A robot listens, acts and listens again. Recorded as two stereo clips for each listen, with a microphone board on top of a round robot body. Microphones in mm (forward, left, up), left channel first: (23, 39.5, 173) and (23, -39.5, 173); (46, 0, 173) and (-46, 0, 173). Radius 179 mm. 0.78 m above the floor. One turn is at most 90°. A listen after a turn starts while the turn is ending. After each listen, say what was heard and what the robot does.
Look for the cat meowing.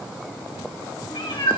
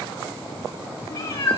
The cat meowing: 60° left. Turn 60° left.
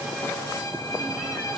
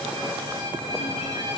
Keep listening.
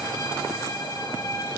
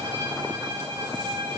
Keep listening.
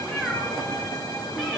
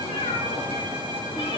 The cat meowing is now 10° left. Turn 10° left.
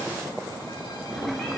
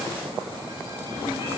Keep listening.
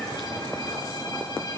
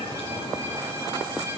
Keep listening.
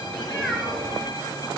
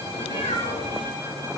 Facing the cat meowing.